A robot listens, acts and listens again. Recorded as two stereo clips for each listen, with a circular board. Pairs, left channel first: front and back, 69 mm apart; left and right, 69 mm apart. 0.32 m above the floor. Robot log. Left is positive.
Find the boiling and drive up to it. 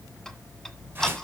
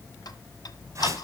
cmd idle
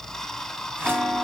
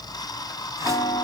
cmd idle
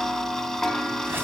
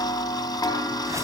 end: I can't make out boiling, only ticking and a whoosh.